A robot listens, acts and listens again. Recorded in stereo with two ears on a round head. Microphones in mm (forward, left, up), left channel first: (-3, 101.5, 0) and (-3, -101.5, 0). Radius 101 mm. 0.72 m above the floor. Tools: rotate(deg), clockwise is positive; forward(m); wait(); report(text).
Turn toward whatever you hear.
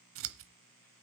rotate(65)
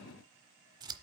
rotate(20)
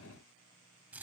rotate(10)
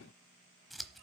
report("Facing the scissors, under 1 m away.")